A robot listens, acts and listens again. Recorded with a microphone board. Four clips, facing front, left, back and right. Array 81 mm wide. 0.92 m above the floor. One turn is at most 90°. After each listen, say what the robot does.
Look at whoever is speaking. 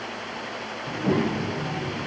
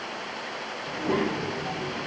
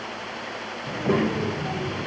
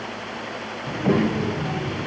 Turn 90° right.
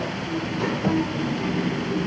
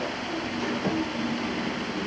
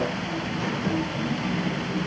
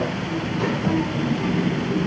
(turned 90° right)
Turn 50° right.
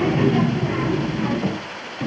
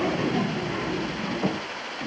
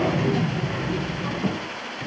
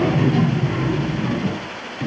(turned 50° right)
Turn 15° right.
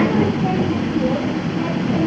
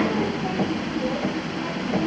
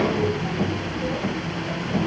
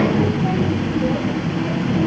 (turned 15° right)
Found it: a child speaking, straight ahead, 1 to 2 m away.